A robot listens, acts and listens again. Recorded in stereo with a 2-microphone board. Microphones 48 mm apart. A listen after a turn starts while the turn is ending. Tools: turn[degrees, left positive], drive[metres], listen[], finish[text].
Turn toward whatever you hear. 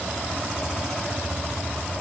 Action: listen[]
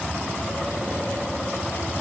Action: listen[]
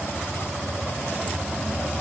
Action: finish[I can't make out anything.]